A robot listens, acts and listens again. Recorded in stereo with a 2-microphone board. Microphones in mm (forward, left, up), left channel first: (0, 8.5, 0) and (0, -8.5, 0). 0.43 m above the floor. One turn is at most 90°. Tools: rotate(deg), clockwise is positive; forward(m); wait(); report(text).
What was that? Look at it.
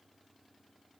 wait()
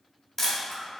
rotate(-20)
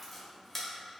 report("Facing the camera shutter, under 1 m away.")